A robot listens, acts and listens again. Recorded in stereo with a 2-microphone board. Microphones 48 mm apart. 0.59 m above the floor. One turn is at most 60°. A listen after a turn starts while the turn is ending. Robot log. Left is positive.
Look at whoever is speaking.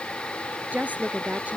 note: The woman speaking: about 35° right or 145° right.
cmd yaw -35
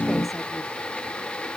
cmd idle
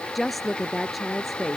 end: Facing the woman speaking.